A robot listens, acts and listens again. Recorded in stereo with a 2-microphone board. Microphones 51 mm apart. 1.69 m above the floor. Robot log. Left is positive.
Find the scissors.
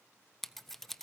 cmd yaw +30
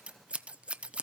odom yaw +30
note: So it is at 25° right.
cmd yaw -25
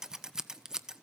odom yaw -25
note: The scissors is now 10° right.
cmd yaw -10
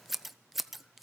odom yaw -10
end: Found it: scissors, straight ahead.